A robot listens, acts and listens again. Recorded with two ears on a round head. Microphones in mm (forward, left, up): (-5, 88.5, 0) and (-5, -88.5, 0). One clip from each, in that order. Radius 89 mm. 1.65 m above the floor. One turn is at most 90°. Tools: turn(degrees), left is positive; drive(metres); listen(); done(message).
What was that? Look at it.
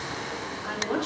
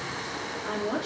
turn(degrees=25)
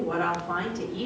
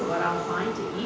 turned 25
done("Found it: a woman speaking, straight ahead, over 4 m away.")